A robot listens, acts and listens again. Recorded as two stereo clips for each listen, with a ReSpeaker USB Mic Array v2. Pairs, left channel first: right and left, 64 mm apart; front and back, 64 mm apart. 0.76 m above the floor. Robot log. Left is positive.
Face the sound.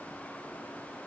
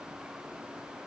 cmd idle
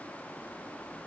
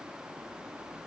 cmd idle
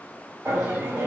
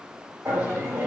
note: The laughter: 145° left.
cmd yaw +145
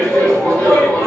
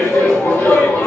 note: The laughter is now 15° right.
cmd yaw -15
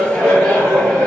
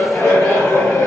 end: Found it: laughter, straight ahead, 1 to 2 m away.